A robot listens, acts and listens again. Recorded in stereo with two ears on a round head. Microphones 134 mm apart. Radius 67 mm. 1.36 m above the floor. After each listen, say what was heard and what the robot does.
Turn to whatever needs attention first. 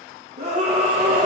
The scream: about 45° right or 135° right. Turn 45° right.
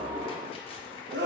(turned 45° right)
So it is at 85° right. Turn 85° right.
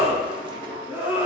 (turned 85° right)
The scream is now 15° right. Turn 15° right.
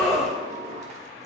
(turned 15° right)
Found it: a scream, straight ahead, 1 to 2 m away.